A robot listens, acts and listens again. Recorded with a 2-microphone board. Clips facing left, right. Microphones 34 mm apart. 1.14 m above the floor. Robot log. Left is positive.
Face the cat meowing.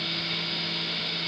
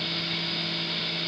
cmd idle
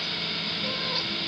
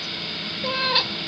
note: The cat meowing: about 70° right or 110° right.
cmd yaw -70
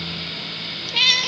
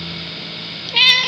note: So it is at 25° right.
cmd yaw -25
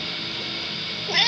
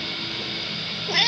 end: Facing the cat meowing.